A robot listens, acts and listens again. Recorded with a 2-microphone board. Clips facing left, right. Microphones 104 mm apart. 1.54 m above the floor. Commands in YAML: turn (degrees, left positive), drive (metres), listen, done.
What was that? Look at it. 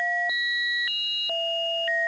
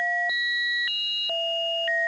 listen: true
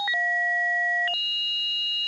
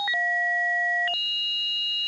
listen: true
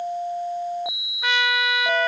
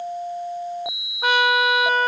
turn: -45
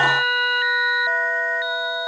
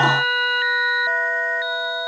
listen: true
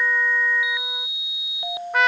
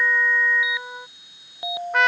done: "Found it: a trumpet, straight ahead."